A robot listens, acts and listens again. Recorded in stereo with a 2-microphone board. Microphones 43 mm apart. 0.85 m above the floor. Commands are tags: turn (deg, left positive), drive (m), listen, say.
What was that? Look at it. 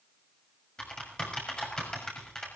<turn deg="20"/>
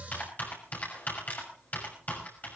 <turn deg="140"/>
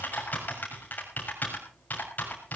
<turn deg="45"/>
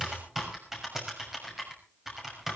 <turn deg="-10"/>
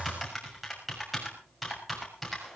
<say>Found it: typing on a keyboard, straight ahead.</say>